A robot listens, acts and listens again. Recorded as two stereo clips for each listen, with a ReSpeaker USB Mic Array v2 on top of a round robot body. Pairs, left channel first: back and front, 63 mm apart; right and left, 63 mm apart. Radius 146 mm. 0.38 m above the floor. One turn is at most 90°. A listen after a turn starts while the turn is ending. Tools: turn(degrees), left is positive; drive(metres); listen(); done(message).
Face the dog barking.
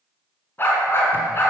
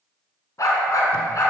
turn(degrees=-90)
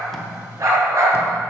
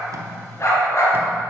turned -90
turn(degrees=-45)
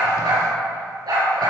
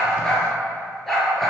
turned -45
done("Found it: a dog barking, straight ahead, over 4 m away.")